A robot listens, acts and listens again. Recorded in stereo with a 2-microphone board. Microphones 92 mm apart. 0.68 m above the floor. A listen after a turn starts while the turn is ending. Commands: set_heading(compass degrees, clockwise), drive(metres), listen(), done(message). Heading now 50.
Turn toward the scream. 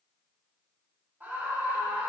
set_heading(70)
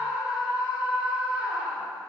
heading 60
set_heading(90)
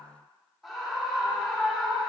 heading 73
done("Found it: a scream, straight ahead, 2 to 4 m away.")